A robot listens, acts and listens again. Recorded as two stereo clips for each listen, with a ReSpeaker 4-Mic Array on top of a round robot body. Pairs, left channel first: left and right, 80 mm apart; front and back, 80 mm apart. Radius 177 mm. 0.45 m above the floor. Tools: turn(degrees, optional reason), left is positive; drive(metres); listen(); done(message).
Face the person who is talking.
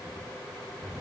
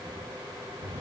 listen()
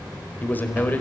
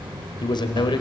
turn(degrees=25, reason="The man speaking: 25° left.")
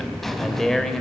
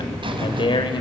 done("Found it: a man speaking, straight ahead, 2 to 4 m away.")